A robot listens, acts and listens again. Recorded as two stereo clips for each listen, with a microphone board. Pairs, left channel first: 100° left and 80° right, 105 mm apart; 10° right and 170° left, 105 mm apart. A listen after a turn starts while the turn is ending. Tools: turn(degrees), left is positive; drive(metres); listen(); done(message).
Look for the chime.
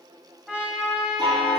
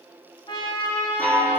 turn(degrees=-80)
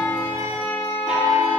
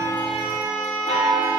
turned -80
done("Found it: a chime, straight ahead, 2 to 4 m away.")